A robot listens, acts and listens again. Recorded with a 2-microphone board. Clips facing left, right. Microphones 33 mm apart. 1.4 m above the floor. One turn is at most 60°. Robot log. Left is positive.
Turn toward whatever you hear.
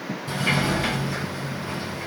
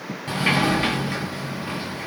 note: The sliding door: about 50° right or 130° right.
cmd yaw -50
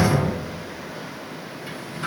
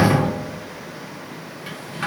note: So it is at 80° right.
cmd yaw -60
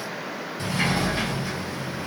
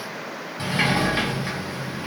note: The sliding door is now 35° right.
cmd yaw -35
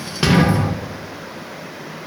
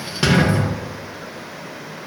end: Found it: a sliding door, straight ahead, 1 to 2 m away.